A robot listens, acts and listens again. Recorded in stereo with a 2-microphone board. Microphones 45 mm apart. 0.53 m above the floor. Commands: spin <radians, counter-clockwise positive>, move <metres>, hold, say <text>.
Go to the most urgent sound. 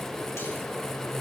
hold
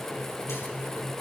hold
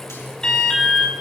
spin 0.35
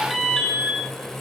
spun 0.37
move 1.0
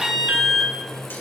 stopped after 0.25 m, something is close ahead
spin -0.17
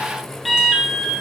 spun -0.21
say Something is in my way. I am facing the alarm but have not reached it.